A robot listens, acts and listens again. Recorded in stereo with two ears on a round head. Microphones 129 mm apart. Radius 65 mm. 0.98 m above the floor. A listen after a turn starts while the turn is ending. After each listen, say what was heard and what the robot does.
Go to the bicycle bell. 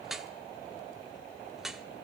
Keep listening.
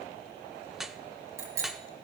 The bicycle bell: about 20° right or 160° right. Turn 20° right.
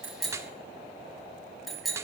Drive 1.0 m forward.
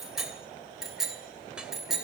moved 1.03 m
Drive 1.0 m forward.
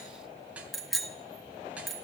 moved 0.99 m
Drive 1.0 m forward.
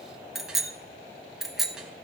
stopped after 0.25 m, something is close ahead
Arrived at the bicycle bell, straight ahead.